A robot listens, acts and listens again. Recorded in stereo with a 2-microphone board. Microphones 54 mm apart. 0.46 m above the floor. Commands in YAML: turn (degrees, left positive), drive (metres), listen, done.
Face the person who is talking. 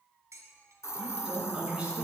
turn: -25
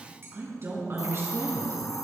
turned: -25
turn: -125
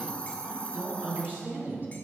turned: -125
turn: -35
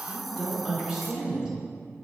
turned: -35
turn: -10
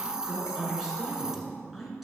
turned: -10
done: "Found it: a woman speaking, straight ahead."